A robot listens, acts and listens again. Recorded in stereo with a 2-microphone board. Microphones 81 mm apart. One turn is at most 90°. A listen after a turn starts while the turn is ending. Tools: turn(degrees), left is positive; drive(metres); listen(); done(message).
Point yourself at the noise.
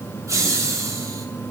turn(degrees=-40)
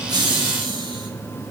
turn(degrees=-90)
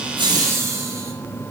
turn(degrees=-35)
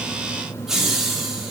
done("Facing the laughter.")